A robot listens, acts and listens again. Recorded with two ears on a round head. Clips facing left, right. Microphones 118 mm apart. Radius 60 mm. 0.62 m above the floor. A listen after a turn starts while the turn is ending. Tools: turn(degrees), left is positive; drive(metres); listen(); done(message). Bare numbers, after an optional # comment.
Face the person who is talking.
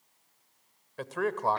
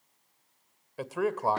turn(-30)
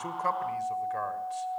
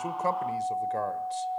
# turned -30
# So it is at 140° right.
turn(-140)
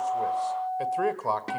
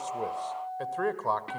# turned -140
# The man speaking is now 10° left.
turn(10)
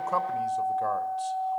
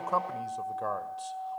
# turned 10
done("Facing the man speaking, 1 to 2 m away.")